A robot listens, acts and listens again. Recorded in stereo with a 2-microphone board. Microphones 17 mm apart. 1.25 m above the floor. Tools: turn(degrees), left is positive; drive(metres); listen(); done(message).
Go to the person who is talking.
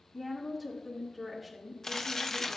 turn(degrees=30)
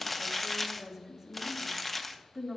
turn(degrees=-25)
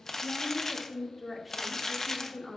drive(metres=1.0)
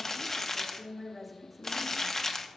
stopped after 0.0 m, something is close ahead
done("Something is in my way. I am facing the woman speaking but have not reached it.")